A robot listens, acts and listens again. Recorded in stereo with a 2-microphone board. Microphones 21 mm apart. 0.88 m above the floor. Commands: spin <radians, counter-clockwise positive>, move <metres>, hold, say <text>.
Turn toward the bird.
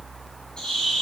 spin 0.79
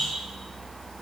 spin 1.48
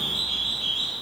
say Found it: a bird, straight ahead, over 4 m away.